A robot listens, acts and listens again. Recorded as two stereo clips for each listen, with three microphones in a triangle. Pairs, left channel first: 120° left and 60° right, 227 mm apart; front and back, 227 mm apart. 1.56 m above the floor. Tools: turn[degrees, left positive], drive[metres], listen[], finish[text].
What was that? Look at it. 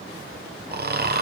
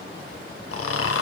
Thought: The snoring: 15° right.
Action: turn[-15]
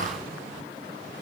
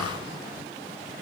Action: finish[Found it: snoring, straight ahead.]